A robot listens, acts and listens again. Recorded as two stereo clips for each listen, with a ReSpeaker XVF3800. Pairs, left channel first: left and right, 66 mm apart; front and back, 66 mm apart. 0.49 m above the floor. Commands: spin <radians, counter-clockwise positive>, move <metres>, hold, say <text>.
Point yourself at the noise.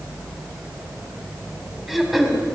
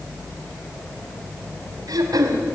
spin 3.14
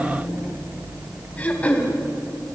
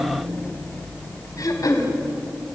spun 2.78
spin 0.35
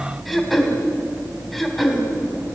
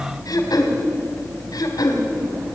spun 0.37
say Facing the throat clearing.